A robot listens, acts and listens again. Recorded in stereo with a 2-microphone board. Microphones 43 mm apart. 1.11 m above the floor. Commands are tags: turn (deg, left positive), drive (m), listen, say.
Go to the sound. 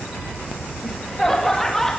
<turn deg="30"/>
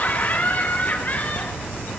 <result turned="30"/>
<turn deg="140"/>
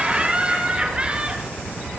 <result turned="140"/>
<turn deg="-25"/>
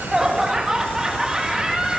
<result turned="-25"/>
<turn deg="-15"/>
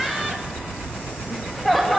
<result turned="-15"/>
<drive m="1.0"/>
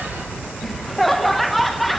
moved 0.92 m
<drive m="1.0"/>
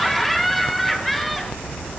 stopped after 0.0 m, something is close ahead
<say>I am next to the laughter.</say>